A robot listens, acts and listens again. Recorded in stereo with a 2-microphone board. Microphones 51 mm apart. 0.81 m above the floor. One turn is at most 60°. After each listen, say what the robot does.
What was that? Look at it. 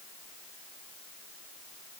Keep listening.
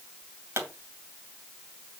Turn 60° right.
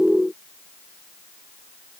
Keep listening.
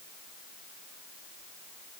I heard a pop, but can't make it out now. It was about straight ahead or 60° right.